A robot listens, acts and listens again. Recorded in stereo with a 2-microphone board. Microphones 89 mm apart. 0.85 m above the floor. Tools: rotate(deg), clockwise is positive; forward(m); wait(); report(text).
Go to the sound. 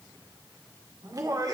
rotate(45)
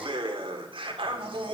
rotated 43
rotate(95)
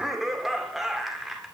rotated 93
forward(1.0)
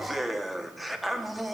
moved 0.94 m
forward(1.0)
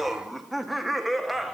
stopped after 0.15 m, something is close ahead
report("I am next to the laughter.")